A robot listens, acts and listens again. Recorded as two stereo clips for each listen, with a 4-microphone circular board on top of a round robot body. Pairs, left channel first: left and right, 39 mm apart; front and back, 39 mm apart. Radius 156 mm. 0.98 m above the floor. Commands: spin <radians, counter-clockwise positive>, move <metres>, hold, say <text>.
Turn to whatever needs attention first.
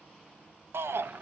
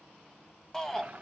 spin -1.40
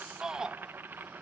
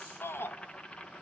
spin -0.26
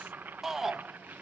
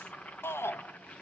say Found it: a shout, straight ahead, 1 to 2 m away.